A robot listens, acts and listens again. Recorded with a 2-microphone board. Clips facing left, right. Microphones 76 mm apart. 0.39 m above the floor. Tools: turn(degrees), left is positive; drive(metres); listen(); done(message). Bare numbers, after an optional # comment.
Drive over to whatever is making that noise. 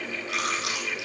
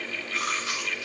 turn(90)
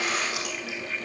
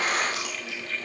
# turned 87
listen()
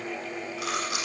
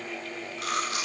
drive(1.0)
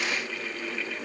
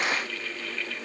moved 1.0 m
listen()
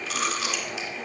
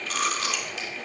drive(1.0)
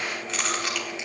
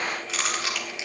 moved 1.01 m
drive(1.0)
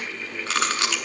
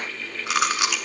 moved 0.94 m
# The chewing is now 10° right.
turn(-10)
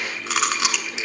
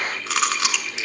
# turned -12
drive(1.0)
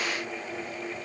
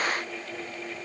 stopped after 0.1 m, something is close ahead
listen()
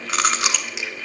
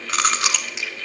done("Arrived at the chewing, straight ahead.")